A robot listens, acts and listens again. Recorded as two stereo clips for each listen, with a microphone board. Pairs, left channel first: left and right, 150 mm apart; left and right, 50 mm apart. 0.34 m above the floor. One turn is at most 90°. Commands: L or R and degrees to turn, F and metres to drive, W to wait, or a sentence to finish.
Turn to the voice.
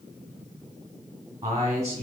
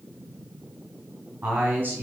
R25
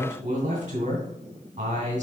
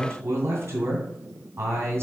R90
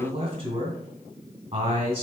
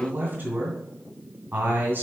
R60
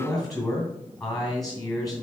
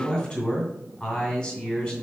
Facing the man speaking.